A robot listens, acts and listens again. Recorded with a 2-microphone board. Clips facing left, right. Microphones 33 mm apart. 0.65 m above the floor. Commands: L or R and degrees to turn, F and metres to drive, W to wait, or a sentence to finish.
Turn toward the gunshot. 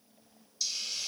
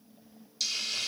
W
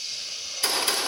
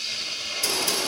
L45
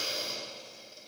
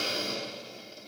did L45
W
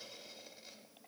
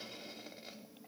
I heard a gunshot, but can't make it out now. It was about straight ahead or 90° left.